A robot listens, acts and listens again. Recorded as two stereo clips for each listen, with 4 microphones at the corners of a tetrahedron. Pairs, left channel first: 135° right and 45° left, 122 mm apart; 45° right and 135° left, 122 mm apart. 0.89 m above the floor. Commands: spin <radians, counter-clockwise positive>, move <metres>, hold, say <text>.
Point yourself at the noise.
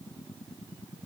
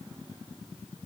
hold
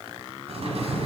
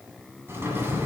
spin 1.13
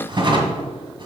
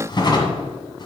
say Found it: a drawer, straight ahead.